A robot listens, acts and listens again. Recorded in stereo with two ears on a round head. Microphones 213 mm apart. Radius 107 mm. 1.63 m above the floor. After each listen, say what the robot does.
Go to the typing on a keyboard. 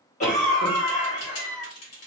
Turn 60° left.
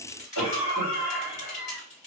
Turn 35° left.
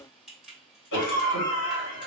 Drive 1.0 m forward.
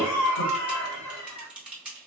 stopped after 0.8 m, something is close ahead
Arrived at the typing on a keyboard, straight ahead.